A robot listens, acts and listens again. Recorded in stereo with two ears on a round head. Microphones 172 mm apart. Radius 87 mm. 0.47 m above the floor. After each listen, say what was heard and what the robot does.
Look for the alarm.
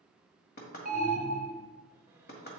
The alarm: about 45° right or 135° right. Turn 45° right.
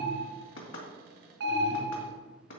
So it is at 80° right. Turn 80° right.
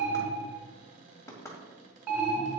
The alarm is now 15° right. Turn 15° right.
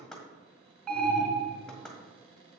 Found it: an alarm, straight ahead, 2 to 4 m away.